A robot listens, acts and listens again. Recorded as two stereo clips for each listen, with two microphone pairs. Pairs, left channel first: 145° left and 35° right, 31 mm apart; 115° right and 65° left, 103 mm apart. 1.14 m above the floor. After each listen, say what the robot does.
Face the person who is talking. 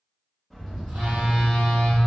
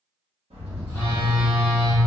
Keep listening.
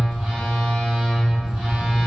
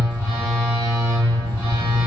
Keep listening.
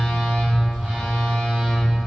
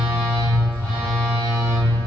I can't make out anyone speaking, only a bird and a phone buzzing.